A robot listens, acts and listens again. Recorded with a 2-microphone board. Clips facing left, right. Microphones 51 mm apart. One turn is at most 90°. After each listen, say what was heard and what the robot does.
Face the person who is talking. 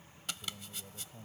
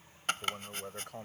Turn 90° right.
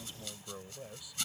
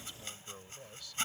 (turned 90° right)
So it is at 15° left. Turn 15° left.
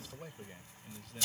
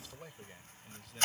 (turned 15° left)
Found it: a man speaking, straight ahead.